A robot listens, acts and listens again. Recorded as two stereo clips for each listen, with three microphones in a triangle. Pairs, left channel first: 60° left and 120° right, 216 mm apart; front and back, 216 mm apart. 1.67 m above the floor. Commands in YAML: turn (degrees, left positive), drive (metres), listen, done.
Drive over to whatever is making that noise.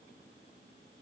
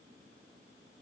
listen: true
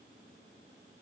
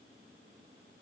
listen: true
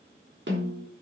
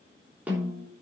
turn: -100
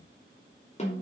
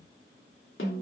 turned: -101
drive: 1.0
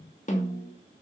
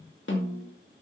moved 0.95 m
turn: 10
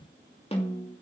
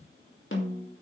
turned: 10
drive: 1.0
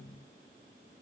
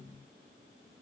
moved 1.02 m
listen: true
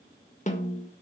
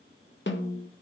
turn: 10
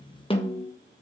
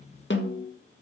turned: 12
drive: 1.0
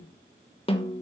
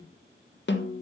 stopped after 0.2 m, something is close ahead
done: "Arrived at the snare drum, straight ahead."